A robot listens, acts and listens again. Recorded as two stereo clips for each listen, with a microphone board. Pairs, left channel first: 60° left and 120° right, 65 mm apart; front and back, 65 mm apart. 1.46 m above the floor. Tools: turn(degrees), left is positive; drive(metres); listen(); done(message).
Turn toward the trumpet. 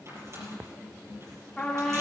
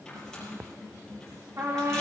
turn(degrees=140)
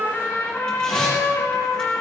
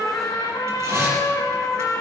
done("Found it: a trumpet, straight ahead.")